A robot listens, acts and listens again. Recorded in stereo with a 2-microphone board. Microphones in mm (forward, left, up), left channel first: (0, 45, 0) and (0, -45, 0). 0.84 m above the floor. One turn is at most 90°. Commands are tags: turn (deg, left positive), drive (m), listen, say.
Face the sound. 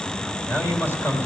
<turn deg="30"/>
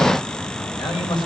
<turn deg="90"/>
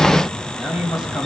<say>Found it: a man speaking, straight ahead, over 4 m away.</say>